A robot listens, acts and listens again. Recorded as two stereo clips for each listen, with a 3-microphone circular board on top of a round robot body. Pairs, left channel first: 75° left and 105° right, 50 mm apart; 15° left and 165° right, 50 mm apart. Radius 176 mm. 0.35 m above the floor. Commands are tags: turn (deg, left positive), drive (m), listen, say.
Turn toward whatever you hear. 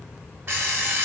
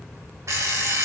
<turn deg="-155"/>
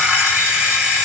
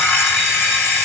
<turn deg="-35"/>
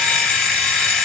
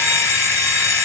<say>Facing the alarm clock, 1 to 2 m away.</say>